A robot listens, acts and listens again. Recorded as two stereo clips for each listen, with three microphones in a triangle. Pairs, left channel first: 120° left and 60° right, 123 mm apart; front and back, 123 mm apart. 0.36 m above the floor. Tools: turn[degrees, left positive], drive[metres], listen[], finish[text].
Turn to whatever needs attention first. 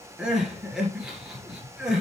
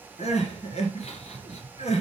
Thought: The crying: 25° left.
Action: turn[25]
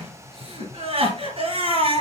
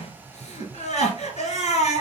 Thought: The crying is now 20° right.
Action: turn[-20]
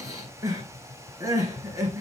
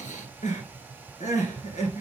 Action: finish[Found it: crying, straight ahead, 2 to 4 m away.]